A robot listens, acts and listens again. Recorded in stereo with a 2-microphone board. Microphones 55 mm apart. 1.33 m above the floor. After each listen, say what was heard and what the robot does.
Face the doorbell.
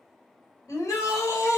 Keep listening.
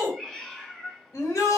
Keep listening.
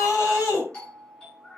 The doorbell: about 15° left or 165° left. Turn 15° left.
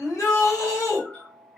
So it is at 150° left. Turn 150° left.
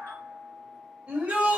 The doorbell is now 45° left. Turn 45° left.
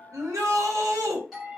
Facing the doorbell, 1 to 2 m away.